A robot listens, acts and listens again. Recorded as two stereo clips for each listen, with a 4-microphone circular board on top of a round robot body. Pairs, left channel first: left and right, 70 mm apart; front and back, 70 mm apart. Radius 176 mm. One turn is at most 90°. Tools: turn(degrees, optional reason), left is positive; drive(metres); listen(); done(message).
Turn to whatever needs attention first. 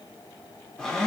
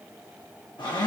listen()
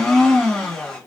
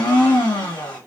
listen()
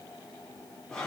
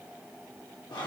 done("I can't make out anything urgent to turn to.")